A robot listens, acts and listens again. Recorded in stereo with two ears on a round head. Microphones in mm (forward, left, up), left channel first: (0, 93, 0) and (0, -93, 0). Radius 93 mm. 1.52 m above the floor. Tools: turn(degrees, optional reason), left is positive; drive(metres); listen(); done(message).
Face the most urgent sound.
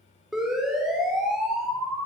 turn(degrees=30)
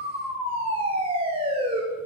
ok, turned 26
turn(degrees=-25, reason="So it is at 25° right.")
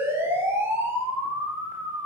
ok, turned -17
turn(degrees=-10, reason="The siren is now 10° right.")
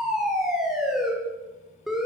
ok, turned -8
done("Facing the siren, over 4 m away.")